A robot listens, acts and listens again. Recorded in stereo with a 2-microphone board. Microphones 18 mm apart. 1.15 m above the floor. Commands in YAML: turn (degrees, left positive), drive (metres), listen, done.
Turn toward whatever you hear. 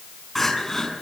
turn: 15
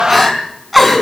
done: "Found it: crying, straight ahead, over 4 m away."